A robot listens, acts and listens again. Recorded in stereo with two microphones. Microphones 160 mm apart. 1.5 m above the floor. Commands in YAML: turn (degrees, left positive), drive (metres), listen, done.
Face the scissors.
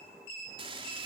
listen: true
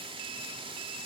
listen: true
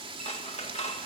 turn: 40
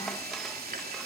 listen: true
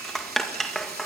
done: "Found it: scissors, straight ahead."